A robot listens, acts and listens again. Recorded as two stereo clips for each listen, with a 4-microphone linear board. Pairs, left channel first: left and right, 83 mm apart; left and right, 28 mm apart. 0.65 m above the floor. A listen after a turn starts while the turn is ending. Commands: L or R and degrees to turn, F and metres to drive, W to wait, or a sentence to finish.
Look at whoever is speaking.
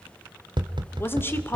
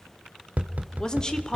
L25
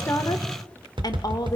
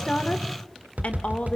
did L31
L120
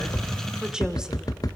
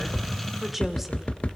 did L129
R10
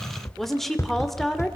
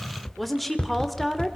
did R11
Found it: a woman speaking, straight ahead, 2 to 4 m away.